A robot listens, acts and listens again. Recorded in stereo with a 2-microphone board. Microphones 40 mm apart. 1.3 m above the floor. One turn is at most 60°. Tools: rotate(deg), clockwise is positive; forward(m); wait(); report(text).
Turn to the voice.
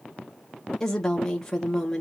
rotate(-30)
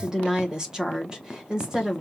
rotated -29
rotate(20)
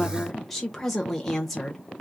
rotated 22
report("Facing the woman speaking, 1 to 2 m away.")